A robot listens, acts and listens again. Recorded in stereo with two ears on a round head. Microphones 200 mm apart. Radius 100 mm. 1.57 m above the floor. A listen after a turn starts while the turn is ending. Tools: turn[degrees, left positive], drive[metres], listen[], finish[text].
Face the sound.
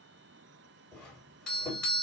Action: turn[30]
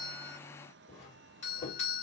Thought: So it is at 150° left.
Action: turn[150]
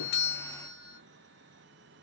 Thought: The doorbell is now 25° left.
Action: turn[25]
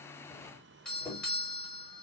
Action: finish[Found it: a doorbell, straight ahead.]